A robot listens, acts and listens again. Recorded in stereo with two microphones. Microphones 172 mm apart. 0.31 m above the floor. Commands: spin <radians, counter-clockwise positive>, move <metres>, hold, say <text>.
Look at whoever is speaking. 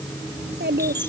spin -1.57
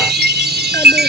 hold
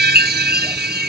hold
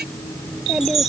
say Found it: a child speaking, straight ahead.